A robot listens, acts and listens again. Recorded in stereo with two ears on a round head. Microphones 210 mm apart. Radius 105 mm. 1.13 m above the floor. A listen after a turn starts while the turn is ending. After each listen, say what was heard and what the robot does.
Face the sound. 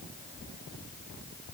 Keep listening.
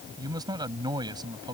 The man speaking: about 20° right or 160° right. Turn 20° right.
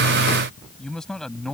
Facing the man speaking.